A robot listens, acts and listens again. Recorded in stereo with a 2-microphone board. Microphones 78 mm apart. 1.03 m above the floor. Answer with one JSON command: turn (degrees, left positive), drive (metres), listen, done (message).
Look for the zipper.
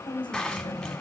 {"turn": 30}
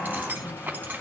{"turn": -25}
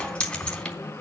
{"turn": 15}
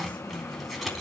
{"done": "Facing the zipper, 2 to 4 m away."}